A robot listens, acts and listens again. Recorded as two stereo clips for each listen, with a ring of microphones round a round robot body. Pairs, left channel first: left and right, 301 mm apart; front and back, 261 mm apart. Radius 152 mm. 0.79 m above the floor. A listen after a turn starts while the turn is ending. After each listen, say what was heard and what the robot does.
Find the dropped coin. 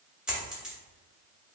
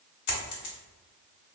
Found it: a dropped coin, straight ahead, 1 to 2 m away.